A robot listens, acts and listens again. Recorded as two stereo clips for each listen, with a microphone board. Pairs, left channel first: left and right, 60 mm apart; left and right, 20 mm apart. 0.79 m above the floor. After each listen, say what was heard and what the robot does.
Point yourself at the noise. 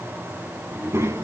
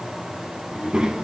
The child speaking: about 55° right or 125° right. Turn 55° right.
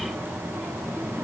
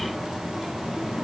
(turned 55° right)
Facing the child speaking, over 4 m away.